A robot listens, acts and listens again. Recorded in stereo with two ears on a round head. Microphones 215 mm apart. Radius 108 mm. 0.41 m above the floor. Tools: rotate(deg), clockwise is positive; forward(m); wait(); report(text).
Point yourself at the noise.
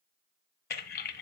rotate(-40)
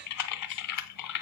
rotate(-100)
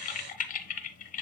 rotate(-35)
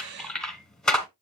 report("Found it: typing on a keyboard, straight ahead.")